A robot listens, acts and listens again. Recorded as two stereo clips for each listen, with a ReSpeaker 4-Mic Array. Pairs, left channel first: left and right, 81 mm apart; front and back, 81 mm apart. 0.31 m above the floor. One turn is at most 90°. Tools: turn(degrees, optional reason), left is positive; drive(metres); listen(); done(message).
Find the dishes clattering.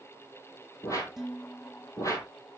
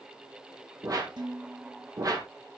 turn(degrees=-90, reason="The dishes clattering: 175° right.")
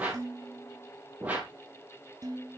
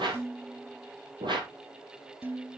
turn(degrees=-90, reason="The dishes clattering is now 120° right.")
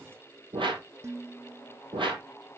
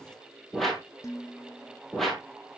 turn(degrees=-45, reason="The dishes clattering is now 45° right.")
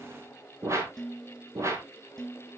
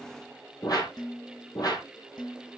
done("Found it: dishes clattering, straight ahead.")